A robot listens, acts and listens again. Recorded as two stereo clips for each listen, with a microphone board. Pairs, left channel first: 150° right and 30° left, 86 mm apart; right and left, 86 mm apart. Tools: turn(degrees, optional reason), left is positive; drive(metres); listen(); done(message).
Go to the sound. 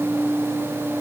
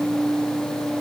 listen()
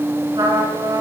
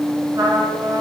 turn(degrees=45, reason="The trumpet: 45° left.")
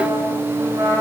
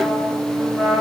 drive(metres=1.0)
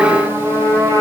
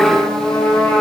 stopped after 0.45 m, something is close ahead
turn(degrees=-10, reason="The trumpet is now 10° right.")
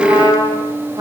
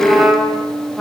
done("Blocked. The trumpet is further on, straight ahead.")